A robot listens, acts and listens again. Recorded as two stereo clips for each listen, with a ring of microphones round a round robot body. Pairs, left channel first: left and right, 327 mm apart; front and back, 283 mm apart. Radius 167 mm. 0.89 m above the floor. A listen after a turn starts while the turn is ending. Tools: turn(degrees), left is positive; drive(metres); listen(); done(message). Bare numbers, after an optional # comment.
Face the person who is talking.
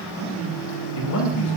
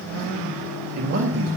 # The man speaking: 135° left.
turn(135)
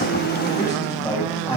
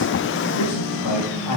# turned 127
# The man speaking is now 10° left.
turn(10)
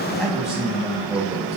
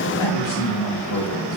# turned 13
done("Facing the man speaking, 2 to 4 m away.")